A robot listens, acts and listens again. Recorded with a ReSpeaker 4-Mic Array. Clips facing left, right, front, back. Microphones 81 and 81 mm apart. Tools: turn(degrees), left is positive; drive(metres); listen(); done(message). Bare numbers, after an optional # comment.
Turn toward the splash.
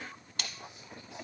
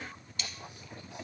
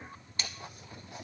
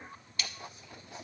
# The splash: 60° left.
turn(60)
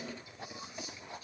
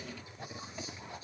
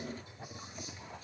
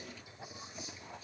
done("I heard a splash from this way, but can't make it out now.")